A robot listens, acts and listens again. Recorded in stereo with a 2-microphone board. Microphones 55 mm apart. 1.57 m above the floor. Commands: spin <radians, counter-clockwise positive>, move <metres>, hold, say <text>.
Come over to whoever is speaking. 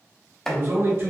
spin -0.87
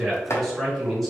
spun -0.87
move 1.0
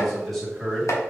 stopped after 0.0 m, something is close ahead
say Blocked. The man speaking is further on, straight ahead.